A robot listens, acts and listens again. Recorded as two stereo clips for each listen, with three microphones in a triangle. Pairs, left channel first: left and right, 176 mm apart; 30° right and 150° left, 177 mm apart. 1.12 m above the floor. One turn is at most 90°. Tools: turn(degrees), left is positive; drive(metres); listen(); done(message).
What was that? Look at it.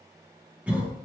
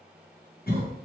done("Facing the cough.")